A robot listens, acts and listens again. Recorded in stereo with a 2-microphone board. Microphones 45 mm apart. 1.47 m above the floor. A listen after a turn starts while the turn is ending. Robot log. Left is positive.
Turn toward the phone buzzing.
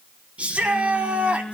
note: The phone buzzing: about 25° left or 155° left.
cmd yaw +25
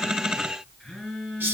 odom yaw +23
end: Facing the phone buzzing.